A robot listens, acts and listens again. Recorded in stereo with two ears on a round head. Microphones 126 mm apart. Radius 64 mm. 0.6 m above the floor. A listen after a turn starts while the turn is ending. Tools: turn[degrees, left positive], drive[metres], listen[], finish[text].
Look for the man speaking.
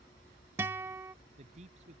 Thought: The man speaking: about 50° right or 130° right.
Action: turn[-50]
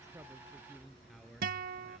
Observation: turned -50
Action: finish[Found it: a man speaking, straight ahead.]